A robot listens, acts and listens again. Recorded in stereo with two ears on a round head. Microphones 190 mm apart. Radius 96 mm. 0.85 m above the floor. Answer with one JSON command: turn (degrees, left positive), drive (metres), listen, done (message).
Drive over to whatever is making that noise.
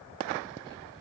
{"listen": true}
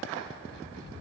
{"listen": true}
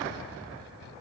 {"done": "I can't make out anything to turn to."}